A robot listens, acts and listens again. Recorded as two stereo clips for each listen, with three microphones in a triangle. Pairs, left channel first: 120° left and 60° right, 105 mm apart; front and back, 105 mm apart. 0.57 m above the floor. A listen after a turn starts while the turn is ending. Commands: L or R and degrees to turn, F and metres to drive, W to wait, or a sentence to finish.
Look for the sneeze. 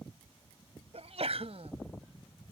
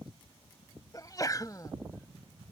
R55
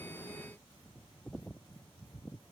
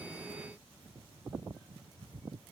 I heard a sneeze from this way, but can't make it out now.